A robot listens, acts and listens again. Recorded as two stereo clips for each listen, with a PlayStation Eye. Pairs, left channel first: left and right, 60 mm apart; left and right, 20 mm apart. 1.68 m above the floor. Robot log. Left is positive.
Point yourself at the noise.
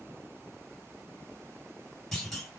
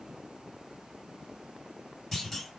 cmd yaw +30
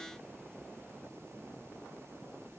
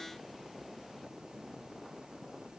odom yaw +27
cmd idle
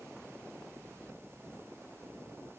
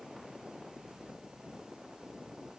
end: I heard a clunk, but can't make it out now. It was about 20° right or 150° left.